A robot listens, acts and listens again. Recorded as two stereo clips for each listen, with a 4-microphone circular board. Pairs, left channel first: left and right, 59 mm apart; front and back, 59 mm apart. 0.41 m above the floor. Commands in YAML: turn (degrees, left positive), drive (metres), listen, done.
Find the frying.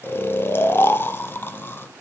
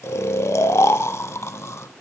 listen: true
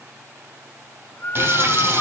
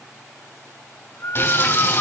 turn: -45
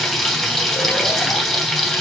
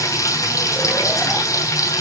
done: "Facing the frying, 2 to 4 m away."